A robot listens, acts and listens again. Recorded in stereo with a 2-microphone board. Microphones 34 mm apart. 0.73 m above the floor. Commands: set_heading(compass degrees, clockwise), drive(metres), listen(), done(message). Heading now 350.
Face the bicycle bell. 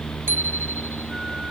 set_heading(80)
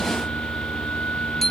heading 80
set_heading(70)
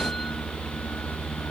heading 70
listen()
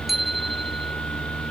done("Found it: a bicycle bell, straight ahead.")